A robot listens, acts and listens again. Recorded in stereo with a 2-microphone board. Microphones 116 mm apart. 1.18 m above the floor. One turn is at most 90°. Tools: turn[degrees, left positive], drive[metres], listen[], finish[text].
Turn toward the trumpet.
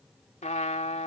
Action: turn[90]
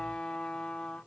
Thought: So it is at 10° left.
Action: turn[10]
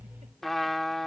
Action: finish[Facing the trumpet.]